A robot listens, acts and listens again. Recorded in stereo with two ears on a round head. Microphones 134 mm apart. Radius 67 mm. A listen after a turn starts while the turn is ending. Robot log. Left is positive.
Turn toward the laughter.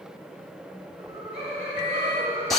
note: The laughter: about 50° right or 130° right.
cmd yaw -50
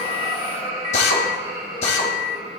note: So it is at 65° right.
cmd yaw -65
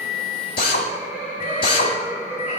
note: The laughter is now 10° right.
cmd yaw -10
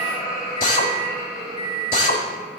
end: Facing the laughter, over 4 m away.